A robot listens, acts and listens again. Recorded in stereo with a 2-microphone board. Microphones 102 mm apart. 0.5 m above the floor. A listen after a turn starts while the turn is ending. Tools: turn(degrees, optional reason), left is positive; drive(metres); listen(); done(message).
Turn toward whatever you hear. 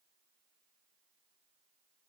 listen()
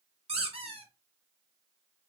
turn(degrees=-75, reason="The squeak: about 75° right or 105° right.")
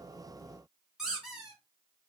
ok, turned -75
done("Facing the squeak, 2 to 4 m away.")